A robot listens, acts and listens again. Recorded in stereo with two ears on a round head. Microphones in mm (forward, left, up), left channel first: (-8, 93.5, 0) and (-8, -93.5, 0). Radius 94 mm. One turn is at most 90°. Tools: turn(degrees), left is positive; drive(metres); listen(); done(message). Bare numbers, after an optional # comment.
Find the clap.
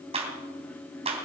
# The clap: about 30° right or 150° right.
turn(-30)
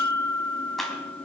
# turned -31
listen()
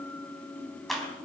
done("Facing the clap, 2 to 4 m away.")